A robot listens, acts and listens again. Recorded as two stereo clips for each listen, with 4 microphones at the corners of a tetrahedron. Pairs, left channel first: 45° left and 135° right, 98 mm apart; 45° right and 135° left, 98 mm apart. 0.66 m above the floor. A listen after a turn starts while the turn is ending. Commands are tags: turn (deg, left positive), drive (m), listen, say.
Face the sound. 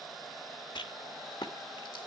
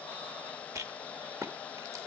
<turn deg="80"/>
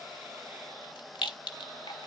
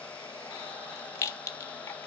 <turn deg="15"/>
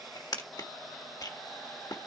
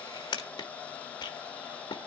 <say>Found it: a rattle, straight ahead, 1 to 2 m away.</say>